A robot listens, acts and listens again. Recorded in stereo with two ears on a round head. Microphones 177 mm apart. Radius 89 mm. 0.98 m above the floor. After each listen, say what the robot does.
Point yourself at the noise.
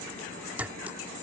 Turn 30° right.
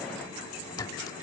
Turn 20° left.
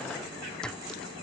Facing the clink.